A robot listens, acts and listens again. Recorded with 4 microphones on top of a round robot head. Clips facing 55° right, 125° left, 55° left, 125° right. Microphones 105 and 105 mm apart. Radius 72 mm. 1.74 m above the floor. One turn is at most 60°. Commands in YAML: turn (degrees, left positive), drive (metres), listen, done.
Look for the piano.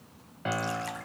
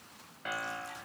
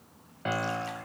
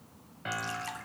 done: "Facing the piano, 1 to 2 m away."